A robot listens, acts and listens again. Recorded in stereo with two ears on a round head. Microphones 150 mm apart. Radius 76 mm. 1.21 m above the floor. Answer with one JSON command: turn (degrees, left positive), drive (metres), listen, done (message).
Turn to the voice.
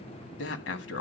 {"turn": 75}
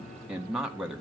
{"done": "Found it: a man speaking, straight ahead."}